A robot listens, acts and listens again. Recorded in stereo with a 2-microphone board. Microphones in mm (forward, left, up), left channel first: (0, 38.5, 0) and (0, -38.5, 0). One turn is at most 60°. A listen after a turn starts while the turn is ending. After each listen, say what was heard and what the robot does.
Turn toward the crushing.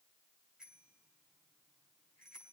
Keep listening.
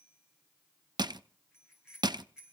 The crushing: about 70° right or 110° right. Turn 60° right.
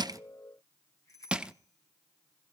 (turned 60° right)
So it is at 15° right. Turn 15° right.
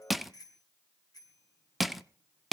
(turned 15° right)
Facing the crushing, under 1 m away.